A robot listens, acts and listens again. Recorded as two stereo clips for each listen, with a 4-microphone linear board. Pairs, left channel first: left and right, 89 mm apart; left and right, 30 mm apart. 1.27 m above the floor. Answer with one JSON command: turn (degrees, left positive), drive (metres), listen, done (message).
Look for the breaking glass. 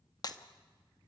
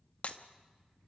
{"turn": 45}
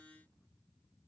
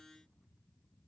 {"listen": true}
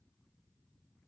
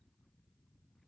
{"done": "I heard breaking glass, but can't make it out now. It was about straight ahead or 90° left."}